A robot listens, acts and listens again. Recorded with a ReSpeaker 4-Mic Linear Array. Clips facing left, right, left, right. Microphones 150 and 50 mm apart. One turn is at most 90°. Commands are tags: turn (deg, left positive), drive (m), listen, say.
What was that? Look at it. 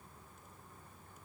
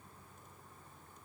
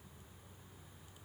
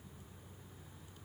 <listen/>
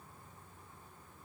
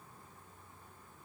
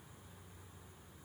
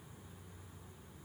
<listen/>
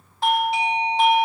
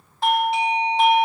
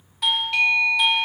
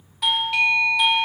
<turn deg="30"/>
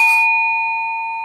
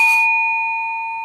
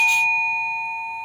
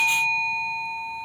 <turn deg="90"/>
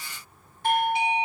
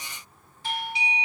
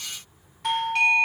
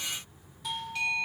<turn deg="60"/>
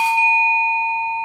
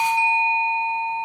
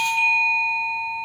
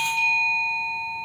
<turn deg="20"/>
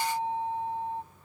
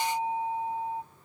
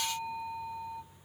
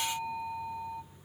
<say>Facing the doorbell, under 1 m away.</say>